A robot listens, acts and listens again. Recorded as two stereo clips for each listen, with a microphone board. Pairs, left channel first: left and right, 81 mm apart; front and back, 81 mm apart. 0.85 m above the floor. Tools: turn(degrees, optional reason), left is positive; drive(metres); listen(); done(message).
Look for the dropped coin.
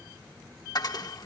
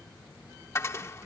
turn(degrees=55, reason="The dropped coin: 55° left.")
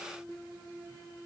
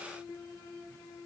done("Facing where the dropped coin came from. I can't hear it now.")